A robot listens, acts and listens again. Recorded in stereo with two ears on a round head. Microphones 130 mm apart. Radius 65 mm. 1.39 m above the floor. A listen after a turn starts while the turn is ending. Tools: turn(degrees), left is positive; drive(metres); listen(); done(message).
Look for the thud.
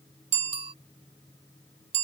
listen()
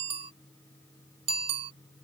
listen()
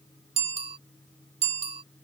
done("I can't make out a thud, only a bicycle bell.")